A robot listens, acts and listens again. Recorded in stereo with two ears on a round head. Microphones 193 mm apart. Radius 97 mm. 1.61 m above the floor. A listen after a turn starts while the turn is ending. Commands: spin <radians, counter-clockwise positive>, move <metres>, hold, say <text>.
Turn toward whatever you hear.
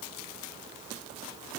hold
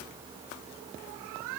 hold
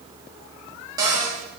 spin -0.35
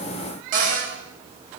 spin -2.44
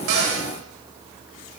hold
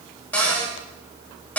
say Facing the cupboard door.